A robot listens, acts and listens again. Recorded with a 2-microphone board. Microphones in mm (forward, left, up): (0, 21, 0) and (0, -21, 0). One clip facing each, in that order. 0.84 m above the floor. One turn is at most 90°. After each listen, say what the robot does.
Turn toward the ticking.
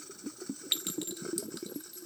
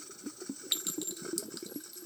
Keep listening.
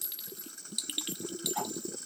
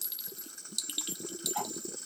Turn 20° right.
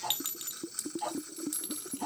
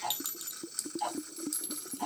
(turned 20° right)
Turn 90° right.
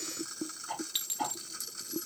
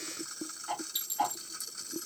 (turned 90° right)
Turn 85° right.
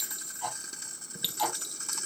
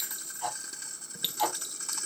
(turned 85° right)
Facing the ticking.